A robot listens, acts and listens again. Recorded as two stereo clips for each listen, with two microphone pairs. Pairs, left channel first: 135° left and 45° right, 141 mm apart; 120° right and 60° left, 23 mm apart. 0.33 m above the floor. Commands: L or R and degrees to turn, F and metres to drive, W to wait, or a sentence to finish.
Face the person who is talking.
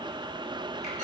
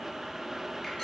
W
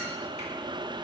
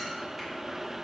W
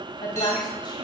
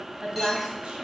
L90
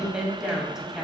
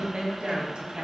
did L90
L40
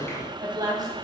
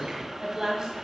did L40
L10
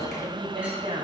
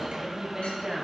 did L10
Facing the woman speaking.